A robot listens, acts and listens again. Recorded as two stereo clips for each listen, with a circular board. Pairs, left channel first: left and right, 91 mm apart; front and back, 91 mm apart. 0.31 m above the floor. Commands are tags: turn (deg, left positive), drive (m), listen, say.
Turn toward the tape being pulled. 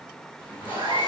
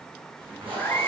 <turn deg="165"/>
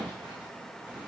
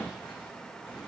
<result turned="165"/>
<listen/>
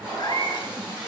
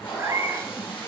<turn deg="-10"/>
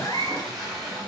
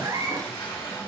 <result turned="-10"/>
<say>Found it: tape being pulled, straight ahead, 2 to 4 m away.</say>